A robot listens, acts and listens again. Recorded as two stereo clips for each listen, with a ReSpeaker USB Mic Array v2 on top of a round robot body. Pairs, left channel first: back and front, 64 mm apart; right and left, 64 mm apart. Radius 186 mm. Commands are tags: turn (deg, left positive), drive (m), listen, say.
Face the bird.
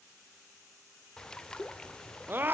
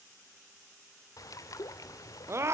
<turn deg="-100"/>
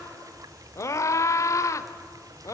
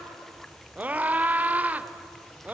<say>Found it: a bird, straight ahead.</say>